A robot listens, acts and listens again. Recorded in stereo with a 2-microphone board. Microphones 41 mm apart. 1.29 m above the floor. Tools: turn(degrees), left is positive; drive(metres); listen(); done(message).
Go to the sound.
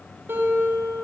turn(degrees=-70)
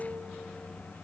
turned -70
drive(metres=1.0)
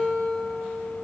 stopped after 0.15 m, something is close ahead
done("Something is in my way. I am facing the guitar but have not reached it.")